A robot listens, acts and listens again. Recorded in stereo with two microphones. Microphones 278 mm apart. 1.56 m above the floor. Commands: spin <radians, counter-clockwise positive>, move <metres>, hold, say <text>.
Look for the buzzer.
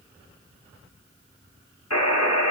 spin 1.13
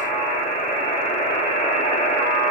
spin 0.52
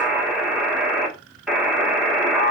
say Found it: a buzzer, straight ahead.